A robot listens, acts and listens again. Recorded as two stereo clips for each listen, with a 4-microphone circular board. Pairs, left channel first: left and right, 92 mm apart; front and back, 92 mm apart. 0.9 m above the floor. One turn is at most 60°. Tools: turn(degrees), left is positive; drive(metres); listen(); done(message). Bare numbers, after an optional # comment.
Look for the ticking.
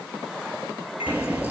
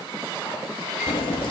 # The ticking: 15° right.
turn(-15)
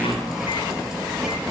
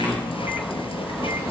done("Found it: ticking, straight ahead, 2 to 4 m away.")